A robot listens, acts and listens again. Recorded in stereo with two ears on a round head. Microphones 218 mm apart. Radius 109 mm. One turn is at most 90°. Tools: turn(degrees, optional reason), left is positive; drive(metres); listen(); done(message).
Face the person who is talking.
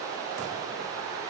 listen()
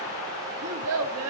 turn(degrees=-70, reason="The child speaking: about 70° right or 110° right.")
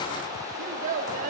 turn(degrees=-35, reason="So it is at 35° right.")
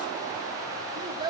turn(degrees=-20, reason="The child speaking is now 20° right.")
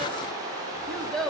done("Facing the child speaking.")